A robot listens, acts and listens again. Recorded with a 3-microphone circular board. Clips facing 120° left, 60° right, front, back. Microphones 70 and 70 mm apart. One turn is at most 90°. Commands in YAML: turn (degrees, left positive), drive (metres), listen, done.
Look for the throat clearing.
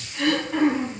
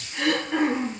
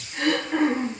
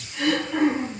turn: -40
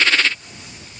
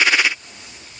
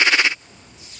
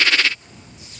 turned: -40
listen: true
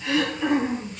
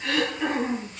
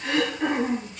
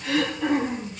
turn: -25
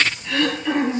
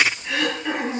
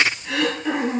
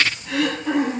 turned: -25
turn: 10
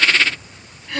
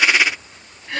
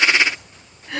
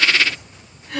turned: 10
done: "Facing the throat clearing."